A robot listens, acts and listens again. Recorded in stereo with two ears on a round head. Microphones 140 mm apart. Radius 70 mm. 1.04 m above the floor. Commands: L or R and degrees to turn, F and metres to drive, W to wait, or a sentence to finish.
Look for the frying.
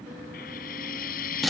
L65
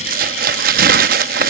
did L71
W
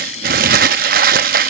W
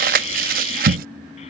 I heard frying, but can't make it out now. It was about 5° right or 45° left.